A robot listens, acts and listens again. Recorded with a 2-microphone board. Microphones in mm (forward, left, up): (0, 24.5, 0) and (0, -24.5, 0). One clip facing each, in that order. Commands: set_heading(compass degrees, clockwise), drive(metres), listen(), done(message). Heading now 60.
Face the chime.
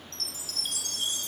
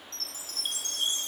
set_heading(90)
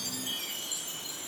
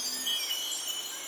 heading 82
set_heading(207)
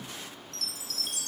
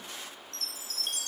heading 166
set_heading(206)
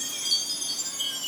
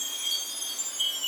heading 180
set_heading(210)
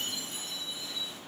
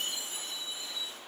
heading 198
set_heading(208)
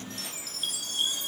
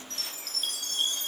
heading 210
done("Facing the chime.")